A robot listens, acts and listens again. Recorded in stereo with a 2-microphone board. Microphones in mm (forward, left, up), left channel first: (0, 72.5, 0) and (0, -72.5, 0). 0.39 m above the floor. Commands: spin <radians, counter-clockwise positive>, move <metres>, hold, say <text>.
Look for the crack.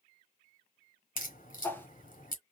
spin 1.22
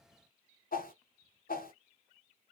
hold
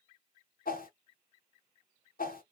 say I heard a crack, but can't make it out now. It was about straight ahead or 40° left.